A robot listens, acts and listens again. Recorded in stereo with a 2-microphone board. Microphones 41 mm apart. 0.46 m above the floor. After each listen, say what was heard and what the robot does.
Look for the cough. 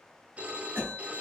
The cough: about 55° right or 125° right. Turn 55° right.
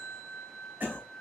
So it is at 55° right. Turn 55° right.
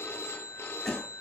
The cough is now 15° left. Turn 15° left.
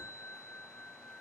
Keep listening.
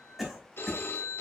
Facing the cough, 2 to 4 m away.